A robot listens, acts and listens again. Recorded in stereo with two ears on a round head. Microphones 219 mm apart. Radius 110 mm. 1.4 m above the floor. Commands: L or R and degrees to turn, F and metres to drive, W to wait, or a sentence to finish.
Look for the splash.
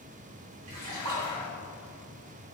R90
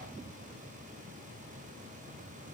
I heard a splash from this way, but can't make it out now.